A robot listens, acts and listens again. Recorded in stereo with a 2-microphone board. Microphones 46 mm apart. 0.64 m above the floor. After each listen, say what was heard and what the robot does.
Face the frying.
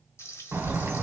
Turn 90° left.
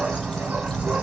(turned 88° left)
Keep listening.
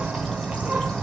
Keep listening.
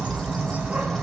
I heard frying from this way, but can't make it out now.